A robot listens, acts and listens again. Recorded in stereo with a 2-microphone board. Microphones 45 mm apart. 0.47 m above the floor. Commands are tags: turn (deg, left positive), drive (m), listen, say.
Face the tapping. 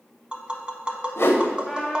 <turn deg="-25"/>
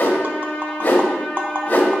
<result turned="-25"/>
<turn deg="-130"/>
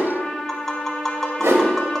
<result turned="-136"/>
<turn deg="10"/>
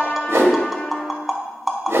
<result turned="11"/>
<say>Facing the tapping, under 1 m away.</say>